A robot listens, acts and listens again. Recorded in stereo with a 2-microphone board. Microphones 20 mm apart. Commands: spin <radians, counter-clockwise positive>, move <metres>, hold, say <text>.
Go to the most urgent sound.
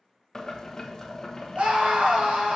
spin -1.13
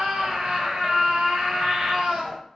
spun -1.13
spin -0.87
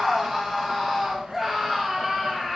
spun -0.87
spin -0.26
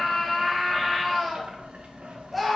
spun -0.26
move 1.0
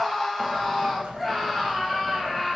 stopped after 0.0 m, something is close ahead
say Blocked. The scream is further on, straight ahead.